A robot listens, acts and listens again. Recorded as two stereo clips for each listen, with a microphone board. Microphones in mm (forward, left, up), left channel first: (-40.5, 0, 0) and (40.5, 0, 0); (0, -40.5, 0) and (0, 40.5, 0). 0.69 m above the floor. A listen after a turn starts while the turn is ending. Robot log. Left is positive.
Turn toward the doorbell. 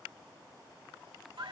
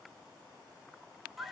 cmd idle
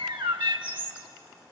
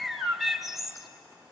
cmd idle
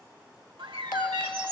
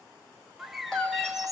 note: The doorbell: 175° right.
cmd yaw -175
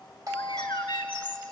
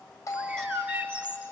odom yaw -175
note: The doorbell is now 10° right.
cmd yaw -10
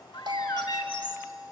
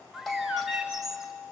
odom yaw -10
end: Facing the doorbell, over 4 m away.